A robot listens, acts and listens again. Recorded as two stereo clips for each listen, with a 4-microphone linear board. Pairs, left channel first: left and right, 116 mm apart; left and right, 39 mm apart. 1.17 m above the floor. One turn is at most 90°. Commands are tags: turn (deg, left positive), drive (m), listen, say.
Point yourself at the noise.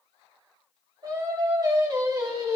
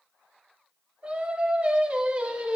<turn deg="-30"/>
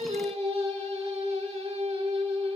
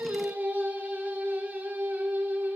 <turn deg="-90"/>
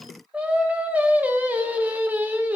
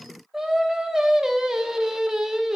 <turn deg="-15"/>
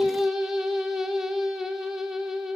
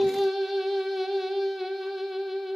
<say>Facing the singing.</say>